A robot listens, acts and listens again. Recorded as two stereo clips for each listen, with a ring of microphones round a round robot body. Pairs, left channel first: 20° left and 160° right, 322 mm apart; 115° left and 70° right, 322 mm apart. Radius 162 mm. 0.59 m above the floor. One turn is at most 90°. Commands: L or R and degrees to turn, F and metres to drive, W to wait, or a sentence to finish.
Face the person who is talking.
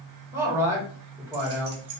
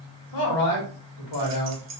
L90
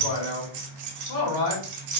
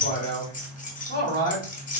L50
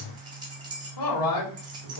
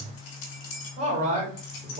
Found it: a man speaking, straight ahead.